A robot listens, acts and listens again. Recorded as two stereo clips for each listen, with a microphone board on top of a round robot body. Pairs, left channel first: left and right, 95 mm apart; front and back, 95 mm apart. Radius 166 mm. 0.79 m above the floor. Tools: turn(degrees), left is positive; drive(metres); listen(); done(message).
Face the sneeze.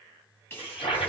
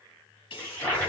turn(degrees=25)
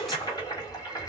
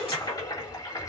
done("Facing the sneeze.")